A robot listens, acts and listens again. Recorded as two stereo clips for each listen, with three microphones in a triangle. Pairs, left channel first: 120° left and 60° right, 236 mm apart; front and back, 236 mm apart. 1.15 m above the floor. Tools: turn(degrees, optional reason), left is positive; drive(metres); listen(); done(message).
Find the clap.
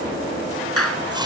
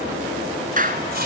turn(degrees=125, reason="The clap: 125° left.")
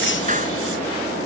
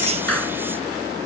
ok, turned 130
listen()
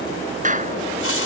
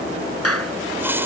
done("Found it: a clap, straight ahead.")